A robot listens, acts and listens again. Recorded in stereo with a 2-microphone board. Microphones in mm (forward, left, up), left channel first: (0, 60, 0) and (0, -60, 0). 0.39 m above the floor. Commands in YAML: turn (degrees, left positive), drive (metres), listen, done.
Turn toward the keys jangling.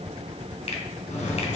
turn: 90
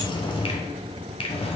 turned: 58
turn: 55
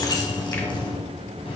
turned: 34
turn: 55
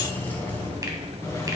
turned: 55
turn: 20
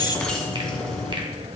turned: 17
done: "Facing the keys jangling, 1 to 2 m away."